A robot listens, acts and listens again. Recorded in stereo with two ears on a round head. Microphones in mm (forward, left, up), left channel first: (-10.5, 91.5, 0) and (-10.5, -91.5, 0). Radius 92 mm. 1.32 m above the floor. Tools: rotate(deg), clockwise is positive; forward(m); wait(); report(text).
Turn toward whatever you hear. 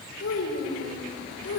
rotate(-45)
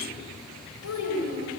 rotate(-85)
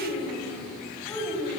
rotate(-10)
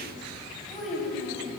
report("Found it: a child speaking, straight ahead, over 4 m away.")